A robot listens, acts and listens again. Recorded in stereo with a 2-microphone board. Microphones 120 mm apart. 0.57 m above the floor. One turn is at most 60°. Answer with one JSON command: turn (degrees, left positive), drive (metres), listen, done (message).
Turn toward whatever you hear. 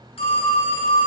{"turn": 50}
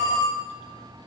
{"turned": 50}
{"turn": 60}
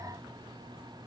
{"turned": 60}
{"turn": 20}
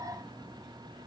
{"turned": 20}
{"listen": true}
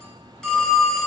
{"done": "Found it: a phone ringing, straight ahead, 2 to 4 m away."}